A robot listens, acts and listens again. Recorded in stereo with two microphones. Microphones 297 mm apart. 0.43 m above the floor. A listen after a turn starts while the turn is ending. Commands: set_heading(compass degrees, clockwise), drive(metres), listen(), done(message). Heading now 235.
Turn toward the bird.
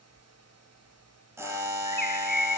set_heading(145)
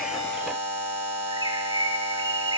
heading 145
set_heading(160)
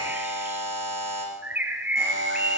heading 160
done("Found it: a bird, straight ahead, 1 to 2 m away.")